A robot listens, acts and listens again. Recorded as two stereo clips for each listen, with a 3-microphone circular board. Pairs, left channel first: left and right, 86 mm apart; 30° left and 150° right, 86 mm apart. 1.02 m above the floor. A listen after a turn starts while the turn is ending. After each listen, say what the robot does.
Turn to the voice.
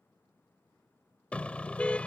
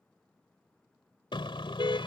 Keep listening.
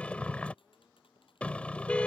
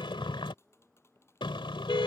Keep listening.
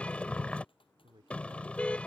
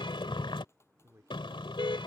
Turn 95° right.
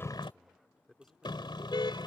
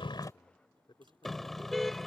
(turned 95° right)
Found it: a man speaking, straight ahead.